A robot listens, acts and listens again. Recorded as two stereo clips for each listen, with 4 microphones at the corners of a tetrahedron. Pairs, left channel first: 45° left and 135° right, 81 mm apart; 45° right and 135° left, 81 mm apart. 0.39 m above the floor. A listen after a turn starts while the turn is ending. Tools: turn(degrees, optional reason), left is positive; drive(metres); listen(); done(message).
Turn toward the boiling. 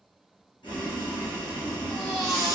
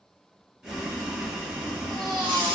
turn(degrees=55, reason="The boiling: 55° left.")
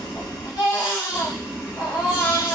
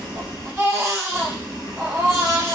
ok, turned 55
turn(degrees=-15, reason="The boiling is now 15° right.")
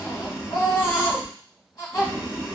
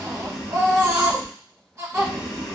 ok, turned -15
done("Found it: boiling, straight ahead.")